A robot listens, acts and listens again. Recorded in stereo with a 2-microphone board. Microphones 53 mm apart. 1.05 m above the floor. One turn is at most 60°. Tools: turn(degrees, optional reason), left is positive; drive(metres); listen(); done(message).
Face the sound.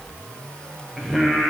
turn(degrees=30)
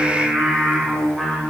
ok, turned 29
turn(degrees=30)
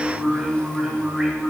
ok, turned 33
turn(degrees=-10, reason="So it is at 10° right.")
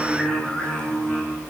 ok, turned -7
turn(degrees=10, reason="The singing is now 10° left.")
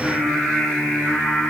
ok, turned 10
done("Found it: singing, straight ahead.")